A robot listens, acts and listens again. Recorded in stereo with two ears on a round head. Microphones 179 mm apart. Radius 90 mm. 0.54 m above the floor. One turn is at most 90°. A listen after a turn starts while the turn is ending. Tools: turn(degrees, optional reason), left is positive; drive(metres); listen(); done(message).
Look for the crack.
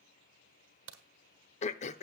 turn(degrees=-70, reason="The crack: about 70° right or 110° right.")
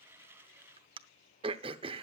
listen()
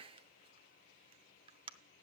done("I heard a crack, but can't make it out now. It was about straight ahead or 40° right.")